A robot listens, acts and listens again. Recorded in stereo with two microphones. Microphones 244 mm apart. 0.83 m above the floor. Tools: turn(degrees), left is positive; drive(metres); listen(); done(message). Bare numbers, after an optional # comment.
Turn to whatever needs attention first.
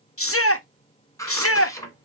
# The shout: about 55° left or 125° left.
turn(55)
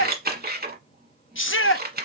# So it is at 55° left.
turn(55)
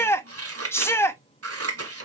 # The shout is now 10° left.
turn(10)
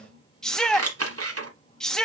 done("Facing the shout, under 1 m away.")